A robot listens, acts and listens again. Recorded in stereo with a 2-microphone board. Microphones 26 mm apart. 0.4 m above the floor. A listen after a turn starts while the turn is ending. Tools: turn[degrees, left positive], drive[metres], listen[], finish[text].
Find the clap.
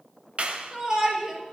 Thought: The clap: about 50° right or 130° right.
Action: turn[-50]
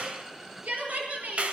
Thought: So it is at 65° right.
Action: turn[-65]
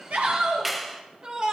Action: finish[Found it: a clap, straight ahead, 2 to 4 m away.]